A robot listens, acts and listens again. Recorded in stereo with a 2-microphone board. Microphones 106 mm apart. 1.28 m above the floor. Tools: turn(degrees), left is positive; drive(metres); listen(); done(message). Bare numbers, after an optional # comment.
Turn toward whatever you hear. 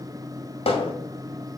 # The hammering: about 65° left or 115° left.
turn(65)
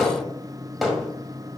done("Found it: hammering, straight ahead, 1 to 2 m away.")